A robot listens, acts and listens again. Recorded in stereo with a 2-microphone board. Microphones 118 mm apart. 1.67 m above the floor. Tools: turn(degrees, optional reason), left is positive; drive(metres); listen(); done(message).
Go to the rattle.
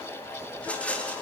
turn(degrees=30)
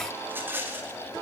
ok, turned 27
turn(degrees=-15, reason="So it is at 15° right.")
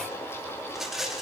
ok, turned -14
drive(metres=1.0)
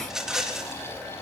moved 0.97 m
drive(metres=1.0)
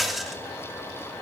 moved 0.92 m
drive(metres=1.0)
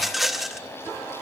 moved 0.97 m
drive(metres=1.0)
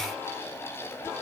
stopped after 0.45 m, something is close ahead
listen()
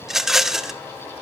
done("I am next to the rattle.")